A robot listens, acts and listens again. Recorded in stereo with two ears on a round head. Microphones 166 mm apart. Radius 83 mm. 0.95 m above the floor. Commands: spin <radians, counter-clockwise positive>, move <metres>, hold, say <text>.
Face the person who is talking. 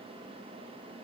hold
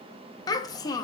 spin 0.35
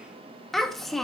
say Found it: a child speaking, straight ahead.